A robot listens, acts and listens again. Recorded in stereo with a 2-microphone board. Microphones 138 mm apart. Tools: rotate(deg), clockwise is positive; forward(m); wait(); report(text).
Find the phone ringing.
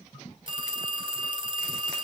rotate(35)
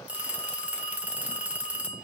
rotate(10)
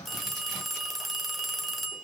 report("Facing the phone ringing, under 1 m away.")